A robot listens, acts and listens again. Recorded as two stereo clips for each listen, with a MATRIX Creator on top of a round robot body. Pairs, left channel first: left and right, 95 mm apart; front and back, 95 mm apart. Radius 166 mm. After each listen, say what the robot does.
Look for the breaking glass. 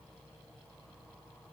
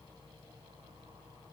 Keep listening.
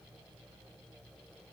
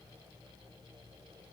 Keep listening.
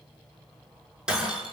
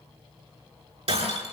Turn 170° right.
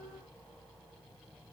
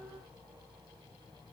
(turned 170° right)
I heard breaking glass from this way, but can't make it out now.